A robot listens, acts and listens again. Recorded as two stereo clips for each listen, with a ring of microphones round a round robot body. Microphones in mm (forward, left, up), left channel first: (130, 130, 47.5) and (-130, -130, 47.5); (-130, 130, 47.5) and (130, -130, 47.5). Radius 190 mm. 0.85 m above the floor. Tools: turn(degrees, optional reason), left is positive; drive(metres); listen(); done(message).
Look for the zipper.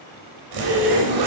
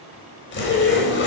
turn(degrees=-165, reason="The zipper: 165° right.")
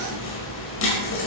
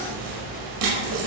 turn(degrees=-10, reason="The zipper is now 10° right.")
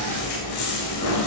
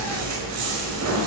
done("Facing the zipper, over 4 m away.")